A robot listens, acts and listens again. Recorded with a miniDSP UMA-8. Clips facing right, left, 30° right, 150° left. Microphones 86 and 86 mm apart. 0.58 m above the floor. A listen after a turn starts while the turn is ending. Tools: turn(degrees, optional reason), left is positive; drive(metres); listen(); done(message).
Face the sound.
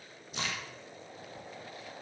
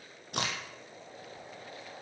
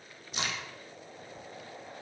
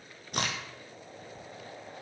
turn(degrees=115, reason="The crack: 115° left.")
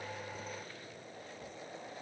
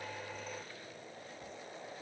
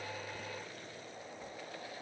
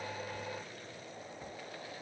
done("I heard a crack from this way, but can't make it out now.")